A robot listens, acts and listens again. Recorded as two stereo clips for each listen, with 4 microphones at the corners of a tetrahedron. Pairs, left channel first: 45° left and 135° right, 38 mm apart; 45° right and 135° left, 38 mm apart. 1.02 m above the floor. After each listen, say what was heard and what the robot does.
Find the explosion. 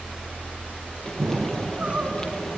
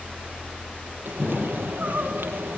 The explosion: 105° right. Turn 105° right.
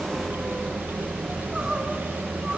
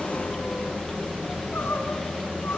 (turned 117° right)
Nothing new. It was at 10° left. Turn 10° left.
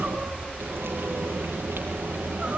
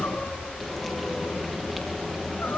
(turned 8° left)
I heard an explosion from this way, but can't make it out now.